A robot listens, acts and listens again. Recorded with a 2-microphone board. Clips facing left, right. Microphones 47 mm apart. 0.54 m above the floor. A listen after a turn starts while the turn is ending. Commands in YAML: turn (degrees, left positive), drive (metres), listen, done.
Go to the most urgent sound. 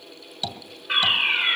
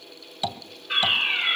turn: 55
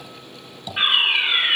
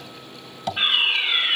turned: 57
turn: 45
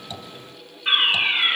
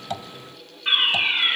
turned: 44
drive: 1.0
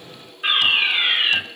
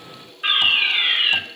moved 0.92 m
drive: 1.0
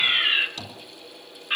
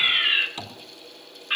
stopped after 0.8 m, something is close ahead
turn: -10
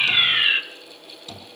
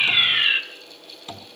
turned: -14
done: "I am next to the fire alarm."